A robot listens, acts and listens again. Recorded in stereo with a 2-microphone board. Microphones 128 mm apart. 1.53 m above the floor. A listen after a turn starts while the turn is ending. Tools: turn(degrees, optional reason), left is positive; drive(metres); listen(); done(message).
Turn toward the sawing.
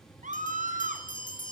listen()
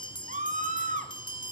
listen()
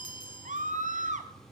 done("I can't make out sawing, only a scream and a bell.")